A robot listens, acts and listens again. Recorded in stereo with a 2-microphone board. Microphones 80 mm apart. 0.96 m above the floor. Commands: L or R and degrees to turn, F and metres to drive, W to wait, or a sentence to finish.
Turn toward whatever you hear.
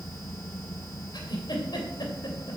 L65
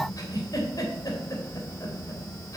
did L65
L45
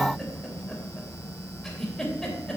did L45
Found it: a giggle, straight ahead.